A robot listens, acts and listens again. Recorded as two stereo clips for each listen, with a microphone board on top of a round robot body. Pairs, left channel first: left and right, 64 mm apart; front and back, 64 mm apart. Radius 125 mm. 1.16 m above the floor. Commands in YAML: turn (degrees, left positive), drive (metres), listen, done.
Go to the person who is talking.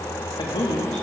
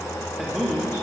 turn: 90
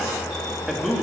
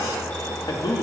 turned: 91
drive: 1.0
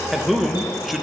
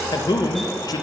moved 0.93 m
drive: 1.0
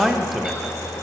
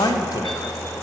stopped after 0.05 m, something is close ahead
done: "Arrived at the man speaking, straight ahead."